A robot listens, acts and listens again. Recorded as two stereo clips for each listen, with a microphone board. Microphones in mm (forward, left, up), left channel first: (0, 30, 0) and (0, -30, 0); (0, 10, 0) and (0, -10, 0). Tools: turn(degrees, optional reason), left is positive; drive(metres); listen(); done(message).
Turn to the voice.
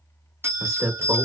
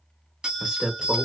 turn(degrees=-55, reason="The man speaking: about 55° right or 125° right.")
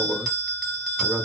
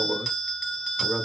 turn(degrees=-50, reason="So it is at 50° right.")
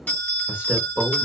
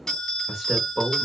turn(degrees=-25, reason="The man speaking is now 25° right.")
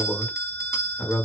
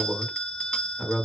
turn(degrees=20, reason="The man speaking is now 20° left.")
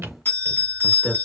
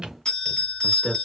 done("Found it: a man speaking, straight ahead.")